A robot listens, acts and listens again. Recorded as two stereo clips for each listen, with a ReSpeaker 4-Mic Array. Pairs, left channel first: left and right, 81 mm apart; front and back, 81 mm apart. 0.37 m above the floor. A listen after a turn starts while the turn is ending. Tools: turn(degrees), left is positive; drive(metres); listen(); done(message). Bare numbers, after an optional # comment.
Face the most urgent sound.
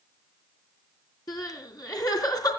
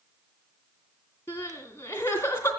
# The crying: 55° left.
turn(55)
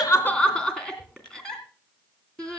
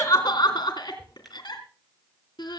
# The crying is now 10° left.
turn(10)
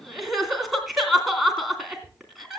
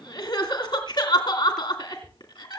done("Found it: crying, straight ahead.")